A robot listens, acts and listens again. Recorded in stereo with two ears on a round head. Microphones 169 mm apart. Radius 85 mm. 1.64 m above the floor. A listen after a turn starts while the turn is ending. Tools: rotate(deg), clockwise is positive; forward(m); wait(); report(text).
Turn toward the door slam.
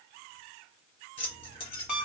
wait()
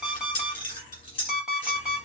wait()
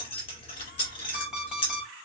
report("I can't make out a door slam to turn to.")